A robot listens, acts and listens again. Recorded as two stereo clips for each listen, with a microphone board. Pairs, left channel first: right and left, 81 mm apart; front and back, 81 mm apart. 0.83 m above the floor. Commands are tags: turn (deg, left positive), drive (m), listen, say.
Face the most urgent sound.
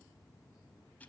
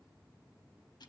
<listen/>
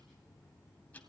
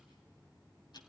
<listen/>
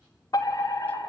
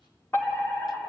<turn deg="-60"/>
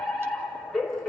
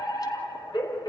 <say>Found it: a fire alarm, straight ahead.</say>